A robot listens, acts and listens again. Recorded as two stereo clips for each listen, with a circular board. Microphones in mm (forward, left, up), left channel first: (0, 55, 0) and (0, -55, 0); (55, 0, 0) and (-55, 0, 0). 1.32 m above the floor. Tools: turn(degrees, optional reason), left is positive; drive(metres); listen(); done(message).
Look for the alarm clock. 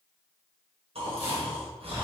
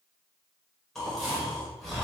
listen()
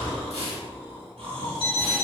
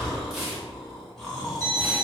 turn(degrees=60, reason="The alarm clock: 60° left.")
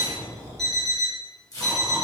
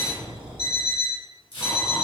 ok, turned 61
done("Found it: an alarm clock, straight ahead, 1 to 2 m away.")